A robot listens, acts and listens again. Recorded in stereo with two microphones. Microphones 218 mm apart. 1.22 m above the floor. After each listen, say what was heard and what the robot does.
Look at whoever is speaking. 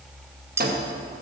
Keep listening.
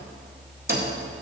Keep listening.
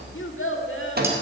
The child speaking: about 65° left or 115° left. Turn 65° left.
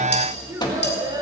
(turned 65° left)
So it is at 20° right. Turn 20° right.
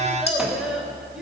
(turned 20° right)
Found it: a child speaking, straight ahead.